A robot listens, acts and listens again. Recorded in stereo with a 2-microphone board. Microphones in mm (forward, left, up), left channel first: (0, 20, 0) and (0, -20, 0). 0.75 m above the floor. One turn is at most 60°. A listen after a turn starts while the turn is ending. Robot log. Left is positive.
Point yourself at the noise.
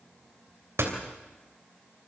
cmd yaw -60
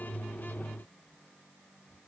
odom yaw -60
note: Nothing new. It was at 30° right.
cmd yaw -30
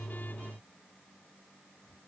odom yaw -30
end: I heard a door slam from this way, but can't make it out now.